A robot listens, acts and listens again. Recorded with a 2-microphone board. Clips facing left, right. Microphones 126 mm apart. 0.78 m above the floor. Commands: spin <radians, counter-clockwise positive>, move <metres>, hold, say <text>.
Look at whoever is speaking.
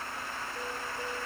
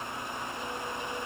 hold
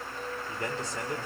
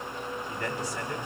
spin 0.44
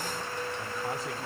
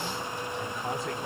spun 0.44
hold
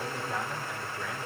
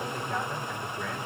say Found it: a man speaking, straight ahead.